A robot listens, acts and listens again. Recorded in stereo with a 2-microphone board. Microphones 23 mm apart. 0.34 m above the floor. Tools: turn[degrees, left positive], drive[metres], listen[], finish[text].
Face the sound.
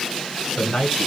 Thought: The man speaking: about 45° left or 135° left.
Action: turn[45]
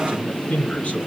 Thought: So it is at 85° left.
Action: turn[85]
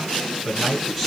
Action: finish[Facing the man speaking.]